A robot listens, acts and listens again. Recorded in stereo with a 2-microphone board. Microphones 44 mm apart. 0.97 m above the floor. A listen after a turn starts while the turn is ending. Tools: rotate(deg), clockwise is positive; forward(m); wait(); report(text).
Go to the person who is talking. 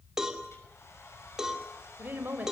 rotate(45)
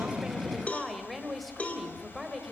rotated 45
forward(1.0)
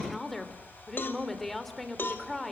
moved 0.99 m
forward(1.0)
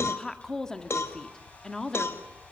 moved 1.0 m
rotate(-15)
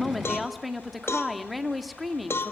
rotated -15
forward(1.0)
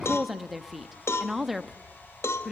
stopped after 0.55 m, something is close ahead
report("I am next to the woman speaking.")